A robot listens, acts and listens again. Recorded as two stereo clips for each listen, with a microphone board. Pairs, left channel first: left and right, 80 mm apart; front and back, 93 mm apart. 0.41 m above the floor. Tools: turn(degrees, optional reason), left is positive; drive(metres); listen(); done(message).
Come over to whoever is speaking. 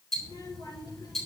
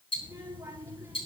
turn(degrees=120, reason="The child speaking: 120° left.")
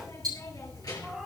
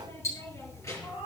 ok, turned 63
turn(degrees=55, reason="The child speaking is now 55° left.")
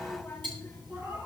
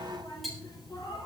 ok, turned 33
turn(degrees=20, reason="The child speaking is now 20° left.")
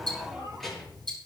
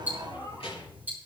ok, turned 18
drive(metres=1.0)
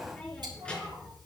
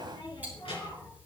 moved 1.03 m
turn(degrees=15, reason="The child speaking is now 15° left.")
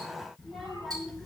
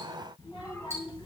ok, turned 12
drive(metres=1.0)
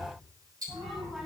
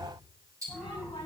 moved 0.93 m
drive(metres=1.0)
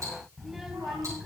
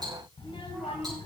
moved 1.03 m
drive(metres=1.0)
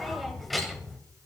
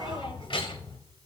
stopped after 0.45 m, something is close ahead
done("I am next to the child speaking.")